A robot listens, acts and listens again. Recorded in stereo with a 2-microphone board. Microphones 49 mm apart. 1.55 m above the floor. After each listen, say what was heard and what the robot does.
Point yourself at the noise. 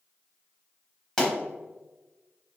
Turn 30° left.
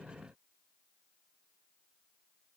Keep listening.
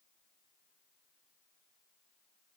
I heard a pop, but can't make it out now. It was about 15° right or 135° left.